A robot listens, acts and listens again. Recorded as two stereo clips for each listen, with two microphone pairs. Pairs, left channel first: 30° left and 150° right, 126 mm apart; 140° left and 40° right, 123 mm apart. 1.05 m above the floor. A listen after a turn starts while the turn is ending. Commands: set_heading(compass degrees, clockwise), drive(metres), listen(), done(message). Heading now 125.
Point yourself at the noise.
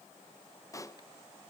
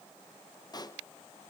set_heading(35)
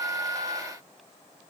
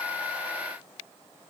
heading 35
done("I heard a pop from this way, but can't make it out now.")